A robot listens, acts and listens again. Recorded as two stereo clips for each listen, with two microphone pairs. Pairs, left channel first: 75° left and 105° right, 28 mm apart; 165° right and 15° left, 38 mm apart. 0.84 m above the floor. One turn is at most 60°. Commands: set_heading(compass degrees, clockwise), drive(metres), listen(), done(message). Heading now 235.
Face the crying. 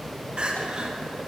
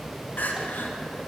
set_heading(295)
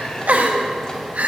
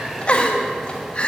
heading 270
set_heading(330)
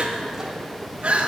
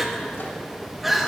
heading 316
set_heading(16)
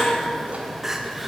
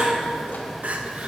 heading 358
set_heading(28)
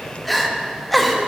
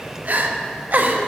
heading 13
set_heading(28)
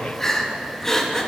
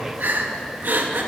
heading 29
done("Facing the crying.")